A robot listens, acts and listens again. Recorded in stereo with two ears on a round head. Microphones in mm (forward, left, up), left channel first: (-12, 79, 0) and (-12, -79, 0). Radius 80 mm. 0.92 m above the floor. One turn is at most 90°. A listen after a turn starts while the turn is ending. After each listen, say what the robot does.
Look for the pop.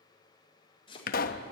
Turn 50° left.
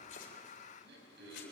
Keep listening.
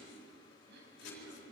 I heard a pop, but can't make it out now. It was about straight ahead or 80° left.